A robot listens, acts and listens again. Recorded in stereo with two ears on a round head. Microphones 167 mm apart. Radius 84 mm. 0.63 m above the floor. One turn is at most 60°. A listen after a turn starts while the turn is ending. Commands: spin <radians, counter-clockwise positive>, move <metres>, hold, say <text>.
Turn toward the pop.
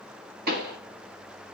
spin -0.96
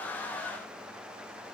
hold
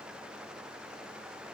say I heard a pop, but can't make it out now. It was about straight ahead or 70° right.